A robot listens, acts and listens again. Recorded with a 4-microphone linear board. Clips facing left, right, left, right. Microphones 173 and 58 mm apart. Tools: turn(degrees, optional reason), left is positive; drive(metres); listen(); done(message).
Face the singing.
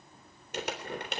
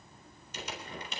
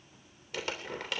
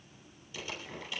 listen()
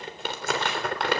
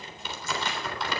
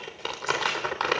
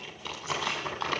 listen()
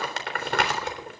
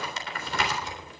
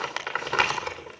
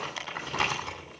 done("I can't make out singing to turn to.")